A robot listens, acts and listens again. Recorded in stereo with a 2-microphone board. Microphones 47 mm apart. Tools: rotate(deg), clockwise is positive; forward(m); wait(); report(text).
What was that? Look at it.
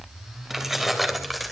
rotate(30)
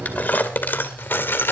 rotate(-55)
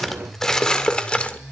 rotate(-25)
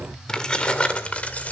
rotate(-30)
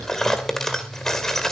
rotate(-10)
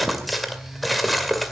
report("Facing the keys jangling.")